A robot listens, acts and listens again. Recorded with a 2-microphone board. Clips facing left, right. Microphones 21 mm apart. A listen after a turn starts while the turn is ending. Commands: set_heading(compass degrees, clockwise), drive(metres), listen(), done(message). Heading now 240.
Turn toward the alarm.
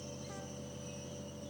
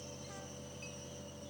listen()
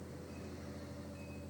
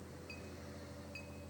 listen()
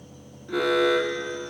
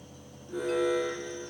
set_heading(165)
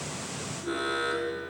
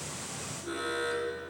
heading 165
set_heading(155)
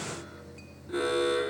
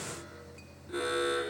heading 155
done("Facing the alarm.")